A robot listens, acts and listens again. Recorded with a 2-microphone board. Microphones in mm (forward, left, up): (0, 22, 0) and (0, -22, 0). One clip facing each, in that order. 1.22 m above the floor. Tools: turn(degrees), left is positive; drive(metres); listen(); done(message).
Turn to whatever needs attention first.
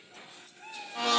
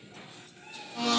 listen()
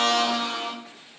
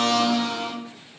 listen()
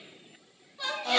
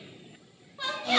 turn(degrees=-25)
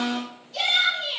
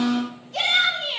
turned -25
turn(degrees=-125)
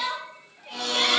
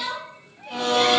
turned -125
turn(degrees=25)
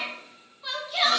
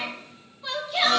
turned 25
done("Facing the shout.")